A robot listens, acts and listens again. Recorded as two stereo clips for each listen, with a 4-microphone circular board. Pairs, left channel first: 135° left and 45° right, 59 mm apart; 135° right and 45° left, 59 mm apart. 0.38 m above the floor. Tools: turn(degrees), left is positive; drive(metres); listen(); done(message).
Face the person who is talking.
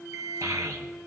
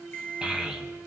turn(degrees=-30)
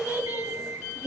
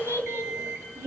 turn(degrees=10)
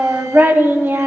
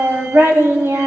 done("Found it: a child speaking, straight ahead.")